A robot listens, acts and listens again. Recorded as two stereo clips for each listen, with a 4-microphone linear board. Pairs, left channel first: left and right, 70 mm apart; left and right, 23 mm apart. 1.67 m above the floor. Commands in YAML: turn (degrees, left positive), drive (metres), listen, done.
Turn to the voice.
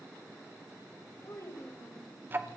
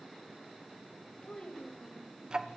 turn: 45
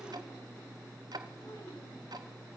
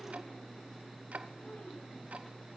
listen: true
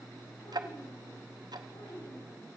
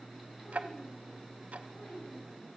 listen: true
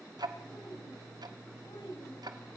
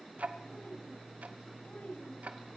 done: "I heard a child speaking, but can't make it out now. It was about straight ahead or 90° left."